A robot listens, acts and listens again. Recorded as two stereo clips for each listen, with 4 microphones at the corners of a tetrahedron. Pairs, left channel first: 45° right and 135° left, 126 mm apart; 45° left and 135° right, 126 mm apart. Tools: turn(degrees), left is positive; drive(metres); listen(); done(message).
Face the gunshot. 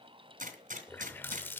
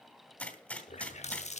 turn(degrees=125)
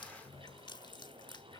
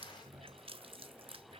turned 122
done("I heard a gunshot from this way, but can't make it out now.")